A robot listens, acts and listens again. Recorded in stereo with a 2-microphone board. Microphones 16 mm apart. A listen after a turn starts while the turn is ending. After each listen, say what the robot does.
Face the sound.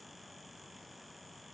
Keep listening.
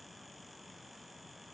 Keep listening.
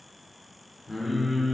Turn 30° left.
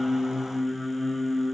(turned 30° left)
Turn 135° left.
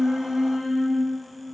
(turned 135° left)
Turn 15° left.
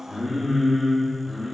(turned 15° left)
Facing the singing.